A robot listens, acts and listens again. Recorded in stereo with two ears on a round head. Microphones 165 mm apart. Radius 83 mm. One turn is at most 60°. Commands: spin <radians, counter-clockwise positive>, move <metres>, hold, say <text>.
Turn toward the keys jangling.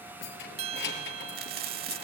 spin 1.05
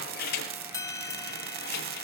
spin 0.96
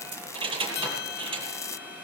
spin -0.44
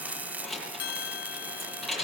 say Found it: keys jangling, straight ahead, over 4 m away.